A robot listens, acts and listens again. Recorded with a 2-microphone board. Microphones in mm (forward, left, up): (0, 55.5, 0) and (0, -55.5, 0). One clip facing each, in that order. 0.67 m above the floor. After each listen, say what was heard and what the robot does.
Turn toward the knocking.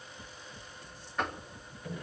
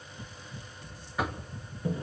Turn 30° right.
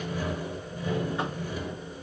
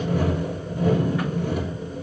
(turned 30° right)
Keep listening.
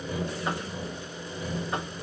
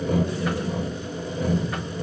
Keep listening.
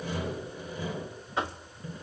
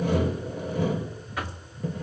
So it is at 25° left. Turn 25° left.
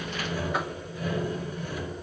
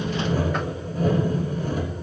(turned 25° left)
Keep listening.
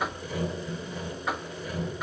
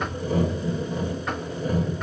Facing the knocking, under 1 m away.